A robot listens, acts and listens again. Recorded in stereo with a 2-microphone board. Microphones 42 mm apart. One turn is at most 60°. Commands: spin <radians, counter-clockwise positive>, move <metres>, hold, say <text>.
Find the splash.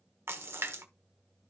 spin -1.05
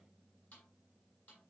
spin -0.52
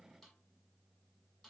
say I heard a splash from this way, but can't make it out now.